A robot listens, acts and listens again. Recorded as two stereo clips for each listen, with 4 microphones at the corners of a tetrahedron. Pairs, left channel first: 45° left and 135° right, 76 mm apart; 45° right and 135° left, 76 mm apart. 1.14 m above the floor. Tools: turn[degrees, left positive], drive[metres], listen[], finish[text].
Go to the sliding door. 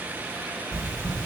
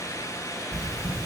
Action: listen[]
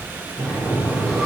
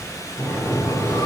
Action: drive[1.0]
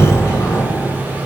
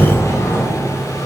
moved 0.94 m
Action: drive[1.0]
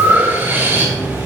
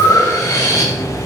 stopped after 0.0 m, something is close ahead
Action: finish[Arrived at the sliding door, straight ahead.]